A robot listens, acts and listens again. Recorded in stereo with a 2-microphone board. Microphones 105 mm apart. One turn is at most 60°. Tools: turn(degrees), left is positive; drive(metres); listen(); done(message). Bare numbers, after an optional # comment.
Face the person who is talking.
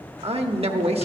# The man speaking: about 65° right or 115° right.
turn(-60)
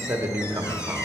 # So it is at 30° right.
turn(-30)
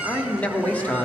# The man speaking is now 15° left.
turn(15)
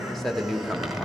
done("Facing the man speaking, 1 to 2 m away.")